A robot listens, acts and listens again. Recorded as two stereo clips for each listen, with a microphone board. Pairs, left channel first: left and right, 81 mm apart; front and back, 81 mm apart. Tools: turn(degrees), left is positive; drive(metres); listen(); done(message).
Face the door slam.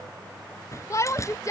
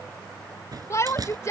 turn(degrees=140)
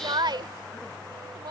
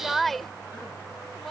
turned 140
done("Facing where the door slam came from. I can't hear it now.")